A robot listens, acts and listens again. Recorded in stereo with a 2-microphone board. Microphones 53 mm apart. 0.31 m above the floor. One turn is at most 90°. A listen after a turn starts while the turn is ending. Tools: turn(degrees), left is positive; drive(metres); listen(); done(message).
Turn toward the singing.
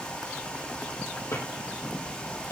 listen()
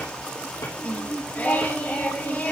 turn(degrees=35)
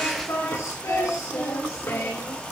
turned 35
turn(degrees=90)
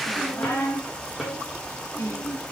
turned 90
turn(degrees=60)
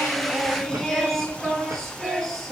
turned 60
done("Found it: singing, straight ahead.")